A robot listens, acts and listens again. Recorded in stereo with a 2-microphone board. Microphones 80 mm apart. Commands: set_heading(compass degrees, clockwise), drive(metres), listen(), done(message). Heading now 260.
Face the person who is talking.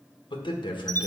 set_heading(170)
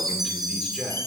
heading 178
done("Found it: a man speaking, straight ahead.")